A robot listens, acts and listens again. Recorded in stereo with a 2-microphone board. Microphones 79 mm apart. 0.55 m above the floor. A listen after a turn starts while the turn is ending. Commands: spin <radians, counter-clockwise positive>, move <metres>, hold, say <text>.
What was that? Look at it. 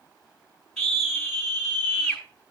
spin 0.52
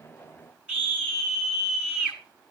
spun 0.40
spin -0.35
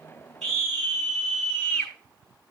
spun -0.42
say Found it: a scream, straight ahead.